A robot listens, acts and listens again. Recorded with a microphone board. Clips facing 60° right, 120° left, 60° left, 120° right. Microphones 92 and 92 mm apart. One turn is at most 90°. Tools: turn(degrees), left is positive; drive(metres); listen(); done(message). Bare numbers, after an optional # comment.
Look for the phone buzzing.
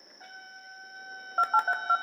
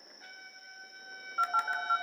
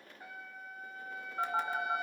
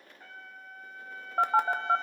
# The phone buzzing: 100° right.
turn(-90)
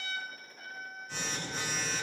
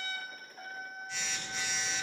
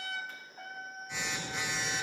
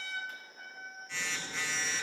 # The phone buzzing is now 15° right.
turn(-15)
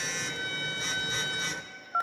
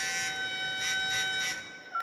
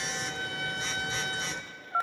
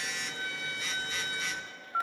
done("Facing the phone buzzing.")